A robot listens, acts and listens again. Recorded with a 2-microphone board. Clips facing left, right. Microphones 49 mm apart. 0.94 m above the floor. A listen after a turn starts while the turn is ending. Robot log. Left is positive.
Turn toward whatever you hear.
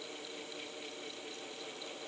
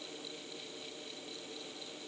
cmd idle
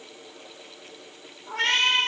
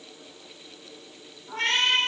cmd yaw +90
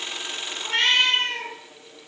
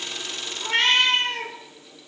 end: Found it: a cat meowing, straight ahead, 1 to 2 m away.